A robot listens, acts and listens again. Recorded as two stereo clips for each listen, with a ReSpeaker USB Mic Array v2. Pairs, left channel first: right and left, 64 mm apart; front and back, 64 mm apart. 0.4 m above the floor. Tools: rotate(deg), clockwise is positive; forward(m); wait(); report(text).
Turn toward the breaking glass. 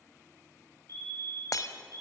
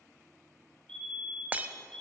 rotate(115)
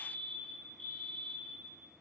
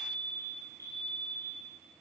report("Facing where the breaking glass came from. I can't hear it now.")